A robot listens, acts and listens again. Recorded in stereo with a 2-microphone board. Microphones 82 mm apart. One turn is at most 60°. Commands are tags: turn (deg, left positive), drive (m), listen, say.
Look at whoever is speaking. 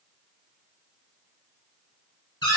<listen/>
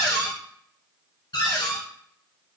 <listen/>
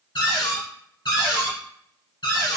<say>I can't make out anyone speaking, only a cupboard door.</say>